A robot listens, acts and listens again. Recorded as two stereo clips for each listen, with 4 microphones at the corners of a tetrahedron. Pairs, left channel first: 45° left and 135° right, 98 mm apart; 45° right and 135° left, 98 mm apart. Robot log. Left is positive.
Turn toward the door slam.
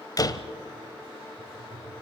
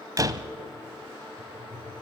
note: The door slam: 90° left.
cmd yaw +90
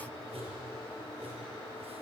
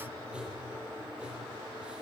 end: I heard a door slam from this way, but can't make it out now.